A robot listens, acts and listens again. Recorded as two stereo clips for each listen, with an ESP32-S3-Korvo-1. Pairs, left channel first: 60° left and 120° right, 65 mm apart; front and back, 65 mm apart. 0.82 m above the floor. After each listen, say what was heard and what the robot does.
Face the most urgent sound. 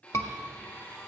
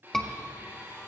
The scream: 80° left. Turn 80° left.
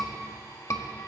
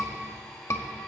The scream is now 30° left. Turn 30° left.
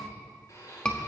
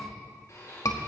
The scream is now 15° right. Turn 15° right.
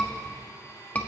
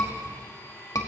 Facing the scream.